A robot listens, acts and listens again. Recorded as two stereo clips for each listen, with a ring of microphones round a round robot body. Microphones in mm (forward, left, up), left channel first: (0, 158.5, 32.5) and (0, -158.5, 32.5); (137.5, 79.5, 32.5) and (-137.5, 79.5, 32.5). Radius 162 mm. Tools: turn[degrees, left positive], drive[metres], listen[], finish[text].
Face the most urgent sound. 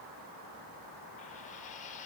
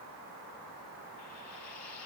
Action: listen[]
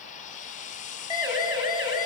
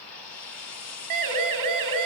Thought: The siren: 165° right.
Action: turn[-165]
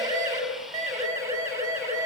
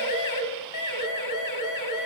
Thought: The siren is now 10° right.
Action: turn[-10]
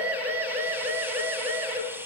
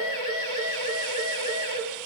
Action: finish[Facing the siren, over 4 m away.]